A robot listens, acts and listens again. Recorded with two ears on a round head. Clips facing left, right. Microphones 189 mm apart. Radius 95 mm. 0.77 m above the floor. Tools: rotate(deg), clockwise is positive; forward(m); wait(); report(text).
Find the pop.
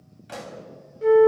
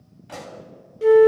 rotate(-20)
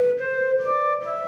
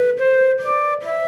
wait()
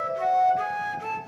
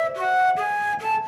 report("I heard a pop, but can't make it out now. It was about straight ahead or 140° left.")